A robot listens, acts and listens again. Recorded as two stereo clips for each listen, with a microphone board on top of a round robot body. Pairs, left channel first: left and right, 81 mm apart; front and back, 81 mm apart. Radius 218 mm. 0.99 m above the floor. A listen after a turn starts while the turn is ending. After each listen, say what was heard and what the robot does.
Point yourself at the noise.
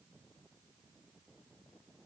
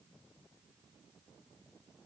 Keep listening.
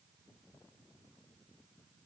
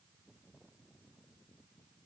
Keep listening.
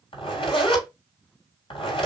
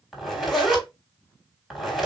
The zipper: 90° left. Turn 90° left.
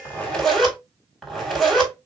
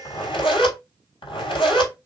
Found it: a zipper, straight ahead.